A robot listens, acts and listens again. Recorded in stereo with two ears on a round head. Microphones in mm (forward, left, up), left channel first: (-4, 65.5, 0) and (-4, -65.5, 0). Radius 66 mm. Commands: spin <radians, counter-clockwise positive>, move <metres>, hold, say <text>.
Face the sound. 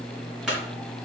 spin -0.52
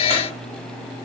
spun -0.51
hold
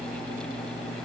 say I heard a clunk, but can't make it out now. It was about 25° left or 145° right.